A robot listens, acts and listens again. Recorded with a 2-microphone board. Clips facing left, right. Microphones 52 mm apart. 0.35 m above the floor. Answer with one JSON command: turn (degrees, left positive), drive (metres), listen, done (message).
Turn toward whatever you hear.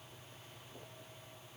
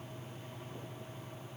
{"listen": true}
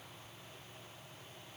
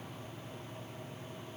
{"listen": true}
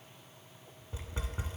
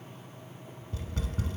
{"turn": 20}
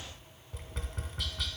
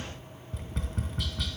{"done": "Facing the tapping, 1 to 2 m away."}